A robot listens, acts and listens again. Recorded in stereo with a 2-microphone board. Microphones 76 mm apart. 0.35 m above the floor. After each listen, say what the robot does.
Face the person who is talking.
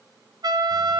Keep listening.
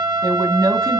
Turn 55° right.
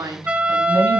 Turn 65° right.
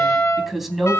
Facing the woman speaking, 2 to 4 m away.